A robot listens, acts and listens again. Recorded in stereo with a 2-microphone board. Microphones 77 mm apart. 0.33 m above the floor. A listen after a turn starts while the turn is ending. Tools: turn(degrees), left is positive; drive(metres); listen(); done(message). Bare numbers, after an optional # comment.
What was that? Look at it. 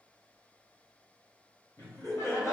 # The laughter: about 40° left or 140° left.
turn(40)
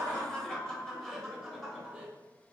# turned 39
# So it is at 10° right.
turn(-10)
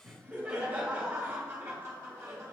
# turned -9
# The laughter is now 40° right.
turn(-40)
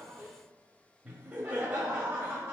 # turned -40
# The laughter is now 15° right.
turn(-15)
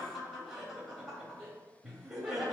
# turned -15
done("Facing the laughter.")